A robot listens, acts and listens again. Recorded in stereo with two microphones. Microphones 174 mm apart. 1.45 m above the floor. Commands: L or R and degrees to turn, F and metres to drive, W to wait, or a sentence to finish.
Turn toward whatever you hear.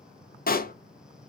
L55
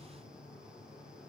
W
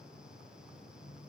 I heard a pop, but can't make it out now. It was about straight ahead or 70° left.